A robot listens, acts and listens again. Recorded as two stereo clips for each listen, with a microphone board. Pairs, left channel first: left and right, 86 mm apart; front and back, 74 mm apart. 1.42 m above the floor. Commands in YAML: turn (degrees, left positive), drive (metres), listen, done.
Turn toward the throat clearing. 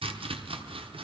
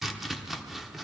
listen: true
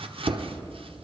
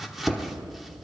listen: true
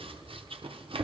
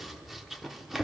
done: "I can't make out throat clearing, only chopping."